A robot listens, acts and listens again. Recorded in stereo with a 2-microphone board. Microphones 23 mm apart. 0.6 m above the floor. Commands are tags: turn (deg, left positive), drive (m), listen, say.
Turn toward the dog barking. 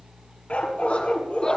<turn deg="70"/>
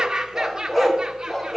<say>Facing the dog barking, 2 to 4 m away.</say>